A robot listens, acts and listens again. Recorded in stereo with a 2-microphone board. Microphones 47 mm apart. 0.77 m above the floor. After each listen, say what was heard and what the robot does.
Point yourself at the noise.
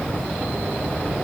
Keep listening.
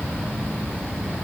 Keep listening.
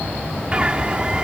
The bird: about 25° right or 155° right. Turn 25° right.
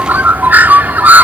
So it is at 130° right. Turn 130° right.
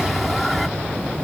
Found it: a bird, straight ahead.